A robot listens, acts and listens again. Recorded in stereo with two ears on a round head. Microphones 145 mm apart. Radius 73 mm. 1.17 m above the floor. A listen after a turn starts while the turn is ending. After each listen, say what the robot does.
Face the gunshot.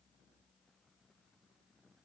Keep listening.
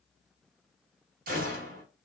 Turn 55° right.
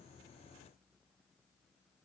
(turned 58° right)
Keep listening.
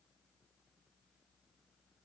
I heard a gunshot, but can't make it out now. It was about straight ahead or 65° right.